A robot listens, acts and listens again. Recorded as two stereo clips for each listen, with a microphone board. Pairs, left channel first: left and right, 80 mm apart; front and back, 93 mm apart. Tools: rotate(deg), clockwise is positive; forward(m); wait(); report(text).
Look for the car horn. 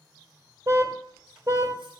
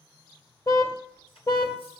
rotate(45)
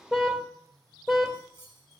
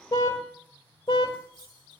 report("Facing the car horn, 2 to 4 m away.")